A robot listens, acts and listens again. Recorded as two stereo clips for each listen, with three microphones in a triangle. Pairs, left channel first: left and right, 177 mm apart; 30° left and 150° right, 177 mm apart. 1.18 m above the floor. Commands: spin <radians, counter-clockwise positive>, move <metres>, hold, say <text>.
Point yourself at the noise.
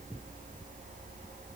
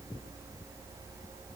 hold
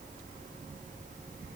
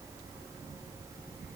hold
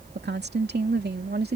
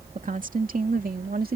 spin -2.01
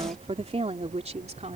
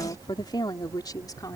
spin -0.70
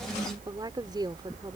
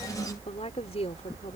spin -0.44
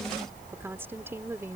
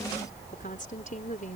spin -0.26
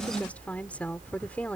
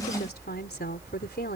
spin 0.17
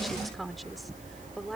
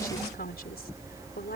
say Facing the woman speaking.